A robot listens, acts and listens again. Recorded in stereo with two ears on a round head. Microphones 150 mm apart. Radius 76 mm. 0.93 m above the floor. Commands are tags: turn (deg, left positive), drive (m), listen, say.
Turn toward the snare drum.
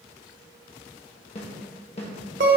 <turn deg="40"/>
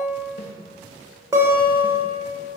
<listen/>
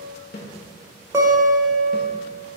<turn deg="90"/>
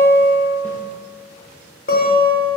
<listen/>
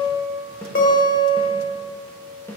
<turn deg="10"/>
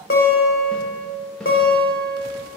<listen/>
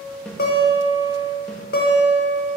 <say>Found it: a snare drum, straight ahead, 1 to 2 m away.</say>